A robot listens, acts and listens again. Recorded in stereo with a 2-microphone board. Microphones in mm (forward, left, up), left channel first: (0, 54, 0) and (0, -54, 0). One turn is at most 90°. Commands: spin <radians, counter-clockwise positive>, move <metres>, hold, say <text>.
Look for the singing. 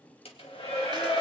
spin 0.61
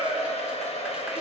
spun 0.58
spin 1.57
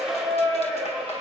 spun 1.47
spin 0.35
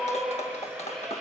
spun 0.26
say Found it: singing, straight ahead, over 4 m away.